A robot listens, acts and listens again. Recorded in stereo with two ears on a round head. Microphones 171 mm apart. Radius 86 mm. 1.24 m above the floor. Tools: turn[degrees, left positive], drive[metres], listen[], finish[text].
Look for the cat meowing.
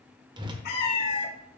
Thought: The cat meowing: about 55° left or 125° left.
Action: turn[55]
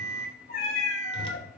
Thought: So it is at 50° left.
Action: turn[50]
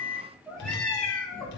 Action: finish[Found it: a cat meowing, straight ahead, 2 to 4 m away.]